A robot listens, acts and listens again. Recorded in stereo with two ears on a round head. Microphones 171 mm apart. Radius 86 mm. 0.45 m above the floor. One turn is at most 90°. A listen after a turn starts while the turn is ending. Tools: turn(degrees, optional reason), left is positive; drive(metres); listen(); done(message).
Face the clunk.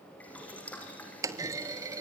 turn(degrees=-20, reason="The clunk: about 20° right or 160° right.")
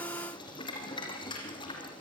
listen()
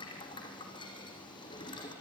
done("I heard a clunk, but can't make it out now. It was about straight ahead or 140° right.")